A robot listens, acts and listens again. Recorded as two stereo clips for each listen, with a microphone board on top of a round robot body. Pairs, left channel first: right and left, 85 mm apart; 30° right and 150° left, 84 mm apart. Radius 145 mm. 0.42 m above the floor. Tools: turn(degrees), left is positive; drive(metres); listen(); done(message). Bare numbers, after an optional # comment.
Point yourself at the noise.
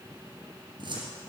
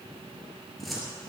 # The cupboard door: 60° left.
turn(60)
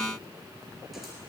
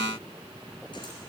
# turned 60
listen()
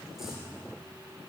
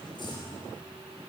done("Found it: a cupboard door, straight ahead.")